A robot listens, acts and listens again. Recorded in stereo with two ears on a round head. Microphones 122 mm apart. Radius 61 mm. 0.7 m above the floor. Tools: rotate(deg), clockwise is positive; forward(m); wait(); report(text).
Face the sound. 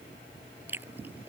rotate(15)
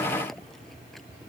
wait()
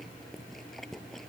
report("Found it: chewing, straight ahead.")